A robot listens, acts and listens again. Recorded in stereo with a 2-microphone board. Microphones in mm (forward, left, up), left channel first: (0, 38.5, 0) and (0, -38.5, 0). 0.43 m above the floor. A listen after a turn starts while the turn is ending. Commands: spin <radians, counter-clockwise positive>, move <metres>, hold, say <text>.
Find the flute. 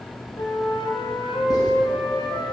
spin 1.31
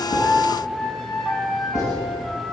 say Facing the flute.